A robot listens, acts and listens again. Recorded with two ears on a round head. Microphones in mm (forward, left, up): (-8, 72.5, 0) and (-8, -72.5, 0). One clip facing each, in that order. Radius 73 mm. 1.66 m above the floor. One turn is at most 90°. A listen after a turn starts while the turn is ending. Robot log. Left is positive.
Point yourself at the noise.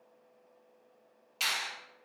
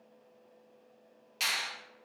cmd yaw -30
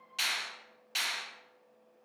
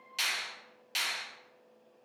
note: So it is at 145° right.
cmd yaw -90
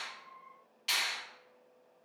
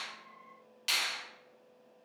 note: The finger snap is now 85° right.
cmd yaw -85
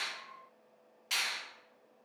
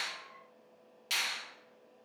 note: The finger snap is now 35° right.
cmd yaw -35
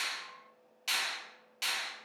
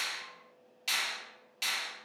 note: The finger snap is now 10° right.
cmd yaw -10
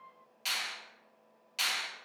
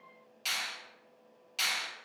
end: Found it: a finger snap, straight ahead, 1 to 2 m away.